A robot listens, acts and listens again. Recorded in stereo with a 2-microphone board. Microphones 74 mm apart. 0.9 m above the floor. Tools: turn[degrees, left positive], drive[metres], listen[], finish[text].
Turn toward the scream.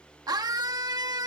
Thought: The scream: about 60° right or 120° right.
Action: turn[-60]
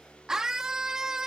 Thought: So it is at 10° right.
Action: turn[-10]
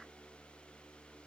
Action: listen[]
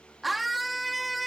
Action: finish[Facing the scream.]